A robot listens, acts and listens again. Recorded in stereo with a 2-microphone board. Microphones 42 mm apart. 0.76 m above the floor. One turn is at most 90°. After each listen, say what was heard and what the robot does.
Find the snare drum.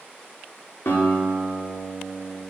Keep listening.
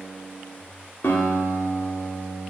Keep listening.
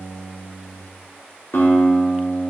I can't make out a snare drum to turn to.